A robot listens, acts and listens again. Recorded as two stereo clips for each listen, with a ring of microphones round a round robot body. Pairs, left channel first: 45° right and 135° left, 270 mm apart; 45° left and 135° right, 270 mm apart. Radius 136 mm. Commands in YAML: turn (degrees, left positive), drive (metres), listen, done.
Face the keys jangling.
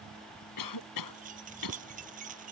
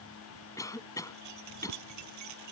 turn: -160
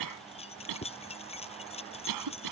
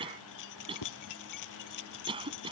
turn: 25
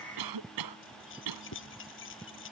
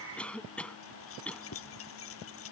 done: "Facing the keys jangling."